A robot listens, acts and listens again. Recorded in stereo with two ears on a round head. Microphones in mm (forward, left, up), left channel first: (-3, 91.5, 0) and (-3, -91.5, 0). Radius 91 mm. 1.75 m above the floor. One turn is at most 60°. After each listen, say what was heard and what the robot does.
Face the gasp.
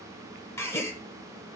Turn 30° left.
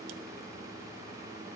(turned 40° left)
Keep listening.
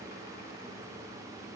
I heard a gasp, but can't make it out now. It was about 25° right or 125° left.